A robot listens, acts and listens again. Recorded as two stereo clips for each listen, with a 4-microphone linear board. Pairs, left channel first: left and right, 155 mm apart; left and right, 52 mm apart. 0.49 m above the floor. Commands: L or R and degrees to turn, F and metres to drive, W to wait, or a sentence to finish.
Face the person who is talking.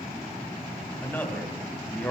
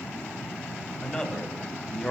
L30
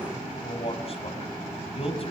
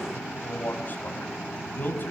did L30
L140
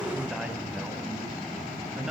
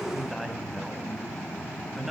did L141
W
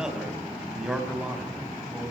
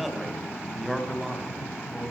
Found it: a man speaking, straight ahead.